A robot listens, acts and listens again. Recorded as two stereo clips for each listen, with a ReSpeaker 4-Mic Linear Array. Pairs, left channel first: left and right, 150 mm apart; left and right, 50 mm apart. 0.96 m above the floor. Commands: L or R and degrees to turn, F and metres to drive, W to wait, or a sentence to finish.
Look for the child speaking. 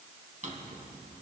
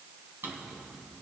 W
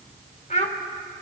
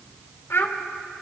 L55
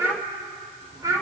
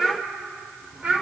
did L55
R25
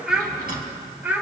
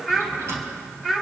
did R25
R10
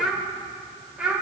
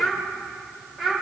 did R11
Facing the child speaking, 2 to 4 m away.